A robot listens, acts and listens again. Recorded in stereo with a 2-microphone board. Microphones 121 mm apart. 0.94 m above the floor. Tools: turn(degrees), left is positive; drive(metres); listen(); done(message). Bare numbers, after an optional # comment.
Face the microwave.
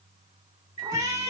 turn(90)
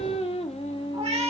listen()
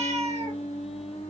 listen()
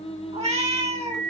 done("Facing the microwave.")